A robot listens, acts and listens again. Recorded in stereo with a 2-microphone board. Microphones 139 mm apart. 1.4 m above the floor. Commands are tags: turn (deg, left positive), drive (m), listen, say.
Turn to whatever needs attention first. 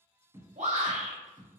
<turn deg="-55"/>
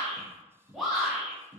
<say>Found it: a shout, straight ahead.</say>